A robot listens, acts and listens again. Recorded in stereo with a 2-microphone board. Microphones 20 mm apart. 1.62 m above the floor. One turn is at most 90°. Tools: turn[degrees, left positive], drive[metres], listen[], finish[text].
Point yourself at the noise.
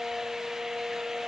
Action: listen[]
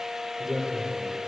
Thought: The man speaking: about 50° right or 130° right.
Action: turn[-50]
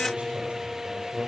Thought: So it is at 80° right.
Action: turn[-80]
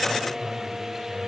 Thought: The man speaking is now 15° right.
Action: turn[-15]
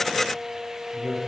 Action: finish[Found it: a man speaking, straight ahead.]